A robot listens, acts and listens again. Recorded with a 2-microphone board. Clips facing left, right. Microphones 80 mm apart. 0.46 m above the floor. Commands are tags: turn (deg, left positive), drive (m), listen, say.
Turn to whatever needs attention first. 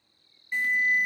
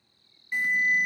<turn deg="-30"/>
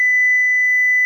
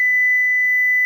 <turn deg="10"/>
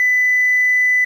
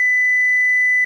<say>Found it: an alarm, straight ahead.</say>